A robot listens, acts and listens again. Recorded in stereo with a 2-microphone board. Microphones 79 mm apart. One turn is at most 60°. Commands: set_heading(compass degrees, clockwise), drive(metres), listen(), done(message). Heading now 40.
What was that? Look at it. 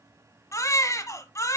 set_heading(0)
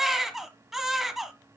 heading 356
done("Facing the baby crying, 1 to 2 m away.")